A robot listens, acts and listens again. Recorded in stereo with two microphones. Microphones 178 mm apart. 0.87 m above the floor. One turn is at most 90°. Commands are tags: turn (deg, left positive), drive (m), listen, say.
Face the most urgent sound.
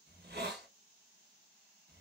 <listen/>
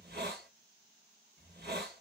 <listen/>
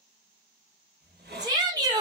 <turn deg="-20"/>
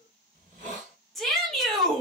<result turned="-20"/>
<say>Found it: a shout, straight ahead.</say>